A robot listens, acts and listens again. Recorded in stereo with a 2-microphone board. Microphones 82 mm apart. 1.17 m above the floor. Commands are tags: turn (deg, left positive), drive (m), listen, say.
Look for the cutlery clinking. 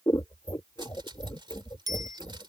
<turn deg="-90"/>
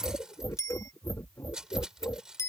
<turn deg="-10"/>
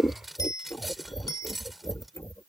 <say>Found it: cutlery clinking, straight ahead.</say>